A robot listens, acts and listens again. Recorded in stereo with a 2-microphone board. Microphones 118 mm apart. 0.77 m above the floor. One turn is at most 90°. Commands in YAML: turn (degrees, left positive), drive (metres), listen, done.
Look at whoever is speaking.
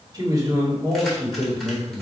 turn: -30
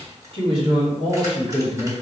turn: -90
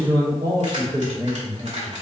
turn: -40
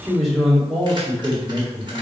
done: "Found it: a man speaking, straight ahead."